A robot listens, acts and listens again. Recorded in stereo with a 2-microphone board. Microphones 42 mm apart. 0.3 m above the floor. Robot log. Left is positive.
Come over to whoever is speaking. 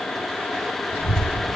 cmd yaw +90
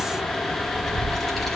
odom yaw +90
cmd fwd 1.0
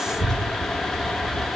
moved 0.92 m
note: The child speaking is now 15° left.
cmd yaw +15
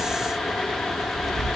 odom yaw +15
cmd fwd 1.0
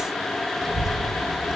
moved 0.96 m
cmd fwd 1.0
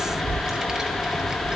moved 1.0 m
note: The child speaking is now 15° right.
cmd yaw -15
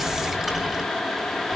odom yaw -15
cmd fwd 1.0
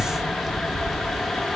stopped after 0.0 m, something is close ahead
end: Arrived at the child speaking, straight ahead.